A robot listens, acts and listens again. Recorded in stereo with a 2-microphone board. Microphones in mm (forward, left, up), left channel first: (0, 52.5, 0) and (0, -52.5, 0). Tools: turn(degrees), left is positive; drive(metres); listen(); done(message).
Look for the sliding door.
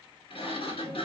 turn(degrees=65)
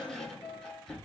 done("Facing the sliding door.")